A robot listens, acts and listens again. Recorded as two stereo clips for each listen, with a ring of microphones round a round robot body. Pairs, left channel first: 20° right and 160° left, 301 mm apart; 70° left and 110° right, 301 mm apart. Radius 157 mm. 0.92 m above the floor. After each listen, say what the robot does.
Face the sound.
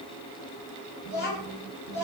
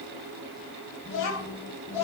Turn 35° left.
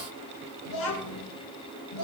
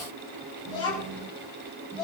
Turn 15° right.
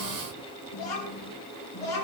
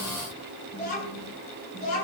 Facing the child speaking.